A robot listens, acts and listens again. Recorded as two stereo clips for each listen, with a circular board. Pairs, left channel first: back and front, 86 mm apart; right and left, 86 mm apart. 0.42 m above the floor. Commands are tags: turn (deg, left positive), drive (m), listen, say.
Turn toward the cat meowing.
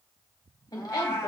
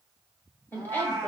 <turn deg="125"/>
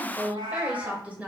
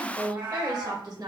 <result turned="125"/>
<turn deg="30"/>
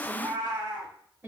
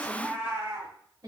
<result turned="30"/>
<turn deg="35"/>
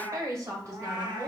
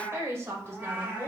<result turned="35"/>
<turn deg="20"/>
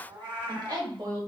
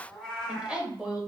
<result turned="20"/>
<say>Found it: a cat meowing, straight ahead, 2 to 4 m away.</say>